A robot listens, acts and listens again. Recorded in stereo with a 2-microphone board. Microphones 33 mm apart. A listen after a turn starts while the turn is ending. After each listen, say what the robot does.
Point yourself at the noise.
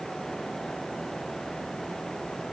Keep listening.
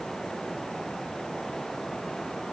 Keep listening.
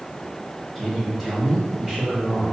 Turn 30° left.
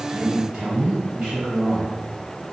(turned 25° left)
Turn 25° right.
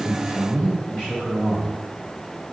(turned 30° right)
Found it: a man speaking, straight ahead.